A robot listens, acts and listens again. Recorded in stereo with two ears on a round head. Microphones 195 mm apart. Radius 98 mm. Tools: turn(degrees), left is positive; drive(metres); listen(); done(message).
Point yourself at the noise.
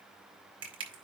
turn(degrees=-25)
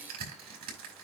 turn(degrees=-135)
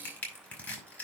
done("Facing the crushing.")